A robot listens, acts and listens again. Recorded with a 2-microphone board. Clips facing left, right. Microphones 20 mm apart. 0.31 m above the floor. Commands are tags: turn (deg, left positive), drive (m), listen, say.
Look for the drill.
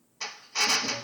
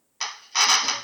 <turn deg="-55"/>
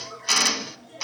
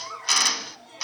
<say>Facing the drill.</say>